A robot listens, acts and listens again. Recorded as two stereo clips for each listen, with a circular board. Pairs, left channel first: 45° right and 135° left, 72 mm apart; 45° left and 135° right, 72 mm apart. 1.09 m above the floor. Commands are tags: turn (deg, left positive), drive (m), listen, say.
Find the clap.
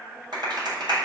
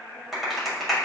<turn deg="135"/>
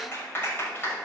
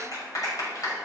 <turn deg="15"/>
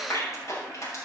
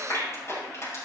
<say>Found it: a clap, straight ahead, over 4 m away.</say>